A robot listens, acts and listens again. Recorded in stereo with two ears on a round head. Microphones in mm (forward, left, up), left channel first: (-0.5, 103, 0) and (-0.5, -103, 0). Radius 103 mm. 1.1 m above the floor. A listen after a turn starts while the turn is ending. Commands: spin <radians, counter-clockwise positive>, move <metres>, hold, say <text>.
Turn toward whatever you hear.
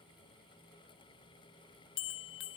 spin 0.96
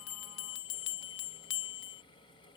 spin 1.05
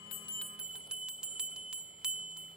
say Facing the bell.